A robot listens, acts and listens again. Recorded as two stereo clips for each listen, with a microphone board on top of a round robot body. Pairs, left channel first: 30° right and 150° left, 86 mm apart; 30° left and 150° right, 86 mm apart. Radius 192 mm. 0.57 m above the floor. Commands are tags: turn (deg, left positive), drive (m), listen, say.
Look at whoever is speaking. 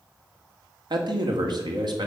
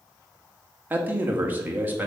<turn deg="145"/>
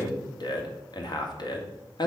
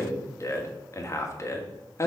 <turn deg="-20"/>
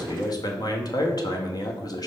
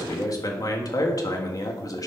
<say>Facing the man speaking, 1 to 2 m away.</say>